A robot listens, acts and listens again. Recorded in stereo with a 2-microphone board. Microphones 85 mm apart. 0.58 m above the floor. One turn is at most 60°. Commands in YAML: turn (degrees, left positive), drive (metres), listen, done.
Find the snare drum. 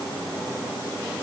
listen: true
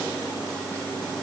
listen: true
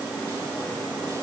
done: "I can't make out a snare drum."